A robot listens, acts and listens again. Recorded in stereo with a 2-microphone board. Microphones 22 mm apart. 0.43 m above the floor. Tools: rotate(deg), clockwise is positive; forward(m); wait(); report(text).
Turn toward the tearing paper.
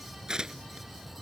rotate(35)
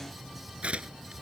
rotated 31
rotate(115)
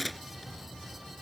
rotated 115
report("Facing the tearing paper.")